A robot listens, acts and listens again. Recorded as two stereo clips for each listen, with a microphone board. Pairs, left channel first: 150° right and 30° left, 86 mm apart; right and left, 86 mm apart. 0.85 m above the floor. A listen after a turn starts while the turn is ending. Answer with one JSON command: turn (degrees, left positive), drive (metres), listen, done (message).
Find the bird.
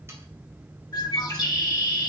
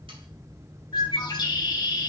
{"turn": -120}
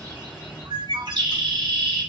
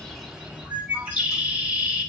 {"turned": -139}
{"turn": 20}
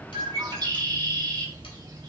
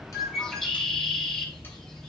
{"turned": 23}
{"done": "Found it: a bird, straight ahead, 1 to 2 m away."}